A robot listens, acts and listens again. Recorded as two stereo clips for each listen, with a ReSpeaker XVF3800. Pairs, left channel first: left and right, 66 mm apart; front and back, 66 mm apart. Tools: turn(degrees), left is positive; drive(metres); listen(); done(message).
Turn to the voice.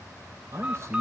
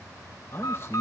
turn(degrees=-50)
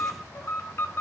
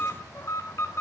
listen()
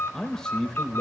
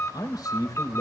turn(degrees=10)
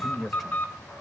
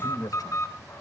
done("Facing the man speaking, 2 to 4 m away.")